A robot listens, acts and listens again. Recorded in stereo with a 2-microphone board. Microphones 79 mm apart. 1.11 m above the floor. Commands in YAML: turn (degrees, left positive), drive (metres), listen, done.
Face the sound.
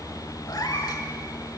turn: 55
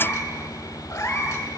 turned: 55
turn: 50
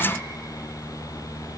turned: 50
listen: true
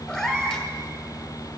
turn: 10
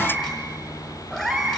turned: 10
done: "Facing the cat meowing, 1 to 2 m away."